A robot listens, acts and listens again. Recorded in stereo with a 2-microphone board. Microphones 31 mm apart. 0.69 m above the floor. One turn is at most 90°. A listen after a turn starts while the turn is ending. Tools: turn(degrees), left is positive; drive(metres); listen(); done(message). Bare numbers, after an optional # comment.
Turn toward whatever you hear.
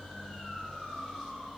listen()
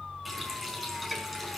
turn(-30)
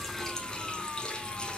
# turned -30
# So it is at 25° left.
turn(25)
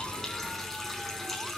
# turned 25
done("Found it: a running tap, straight ahead, over 4 m away.")